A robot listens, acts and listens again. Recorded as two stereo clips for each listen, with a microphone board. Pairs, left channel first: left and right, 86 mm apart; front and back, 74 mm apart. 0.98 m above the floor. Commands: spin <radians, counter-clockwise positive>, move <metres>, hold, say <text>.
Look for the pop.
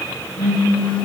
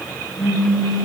spin 1.57
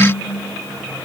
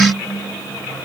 say Facing where the pop came from. I can't hear it now.